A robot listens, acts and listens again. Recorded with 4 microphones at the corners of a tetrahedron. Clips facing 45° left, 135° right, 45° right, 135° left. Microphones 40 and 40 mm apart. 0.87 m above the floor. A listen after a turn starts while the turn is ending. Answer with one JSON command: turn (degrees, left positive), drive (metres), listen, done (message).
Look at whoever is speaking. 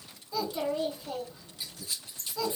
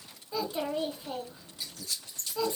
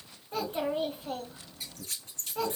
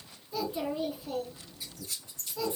{"turn": -75}
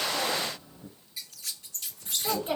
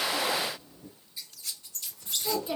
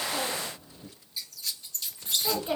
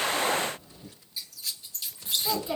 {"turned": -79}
{"done": "Facing the child speaking, 2 to 4 m away."}